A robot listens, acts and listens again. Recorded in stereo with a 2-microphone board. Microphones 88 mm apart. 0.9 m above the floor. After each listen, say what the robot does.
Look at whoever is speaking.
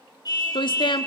Turn 65° left.
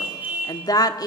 Turn 50° left.
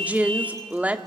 Turn 15° right.
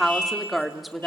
Found it: a woman speaking, straight ahead.